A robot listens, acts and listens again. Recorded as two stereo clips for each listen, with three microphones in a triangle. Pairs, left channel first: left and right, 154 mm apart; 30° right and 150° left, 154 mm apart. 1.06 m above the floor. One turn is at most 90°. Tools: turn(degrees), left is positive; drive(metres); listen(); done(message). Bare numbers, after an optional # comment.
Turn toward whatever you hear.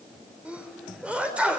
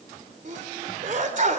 # The sneeze: 170° right.
turn(-90)
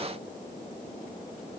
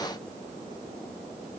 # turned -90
# Nothing new. It was at 80° right.
turn(-80)
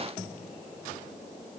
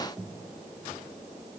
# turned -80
done("I heard a sneeze from this way, but can't make it out now.")